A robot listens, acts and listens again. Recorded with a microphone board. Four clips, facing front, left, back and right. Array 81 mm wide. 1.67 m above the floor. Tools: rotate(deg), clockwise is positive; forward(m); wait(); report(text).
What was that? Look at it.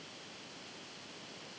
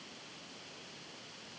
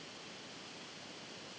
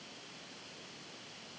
wait()
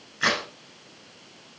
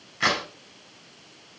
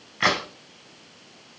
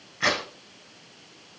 rotate(-170)
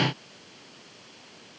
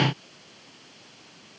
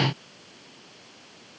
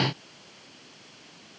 report("I heard a crack from this way, but can't make it out now.")